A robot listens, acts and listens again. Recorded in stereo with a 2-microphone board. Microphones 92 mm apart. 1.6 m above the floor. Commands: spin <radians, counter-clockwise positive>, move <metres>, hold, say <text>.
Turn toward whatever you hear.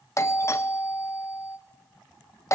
spin 0.61
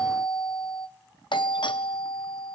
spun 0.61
spin 2.01
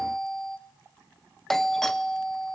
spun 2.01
say Found it: a doorbell, straight ahead.